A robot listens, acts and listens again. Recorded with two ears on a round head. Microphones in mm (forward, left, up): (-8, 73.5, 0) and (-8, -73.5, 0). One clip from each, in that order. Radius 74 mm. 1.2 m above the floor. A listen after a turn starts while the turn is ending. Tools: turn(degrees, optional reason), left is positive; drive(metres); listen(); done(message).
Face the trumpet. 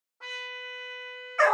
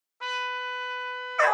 turn(degrees=-60, reason="The trumpet: about 60° right or 120° right.")
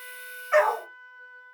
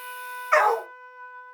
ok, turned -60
turn(degrees=-20, reason="So it is at 20° right.")
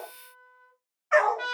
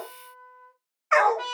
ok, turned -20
done("Facing the trumpet, 1 to 2 m away.")